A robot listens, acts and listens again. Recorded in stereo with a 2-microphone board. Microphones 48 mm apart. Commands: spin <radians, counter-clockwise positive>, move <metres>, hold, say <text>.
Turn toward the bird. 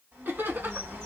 spin -1.13
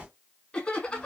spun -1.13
spin -0.35
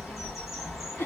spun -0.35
say Facing the bird.